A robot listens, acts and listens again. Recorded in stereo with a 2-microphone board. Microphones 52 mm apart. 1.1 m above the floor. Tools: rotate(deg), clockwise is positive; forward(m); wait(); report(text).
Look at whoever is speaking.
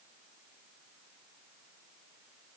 wait()
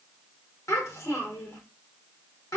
rotate(-90)
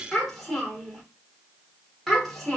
report("Facing the child speaking.")